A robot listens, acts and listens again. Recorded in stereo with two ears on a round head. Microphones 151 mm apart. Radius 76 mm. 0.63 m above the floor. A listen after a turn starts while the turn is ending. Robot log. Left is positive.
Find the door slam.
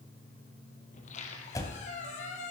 note: The door slam: about 20° left or 160° left.
cmd yaw +20
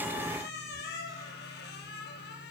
cmd idle
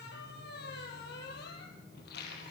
end: I heard a door slam, but can't make it out now. It was about straight ahead or 140° left.